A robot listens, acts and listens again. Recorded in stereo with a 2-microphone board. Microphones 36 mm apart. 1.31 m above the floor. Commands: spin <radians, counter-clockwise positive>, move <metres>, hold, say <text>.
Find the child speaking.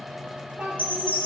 spin -0.96
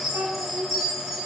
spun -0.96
spin -1.31
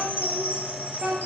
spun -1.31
spin -0.52
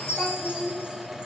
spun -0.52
say Facing the child speaking.